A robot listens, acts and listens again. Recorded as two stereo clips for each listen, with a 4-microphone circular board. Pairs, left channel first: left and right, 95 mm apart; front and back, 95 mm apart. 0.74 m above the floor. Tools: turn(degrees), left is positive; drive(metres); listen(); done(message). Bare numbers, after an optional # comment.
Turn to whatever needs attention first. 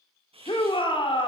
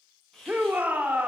# The shout: 105° left.
turn(105)
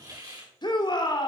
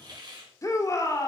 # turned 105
# The shout is now 55° left.
turn(55)
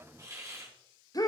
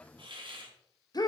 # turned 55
# The shout is now 40° left.
turn(40)
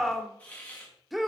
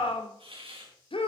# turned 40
done("Facing the shout, 2 to 4 m away.")